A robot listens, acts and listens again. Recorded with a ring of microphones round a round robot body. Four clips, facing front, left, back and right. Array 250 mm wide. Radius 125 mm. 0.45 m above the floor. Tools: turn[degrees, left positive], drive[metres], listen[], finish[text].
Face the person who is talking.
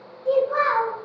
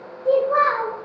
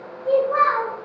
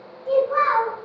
Thought: The child speaking: 105° left.
Action: turn[105]
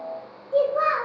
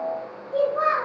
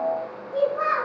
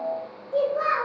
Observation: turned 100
Action: finish[Found it: a child speaking, straight ahead, 1 to 2 m away.]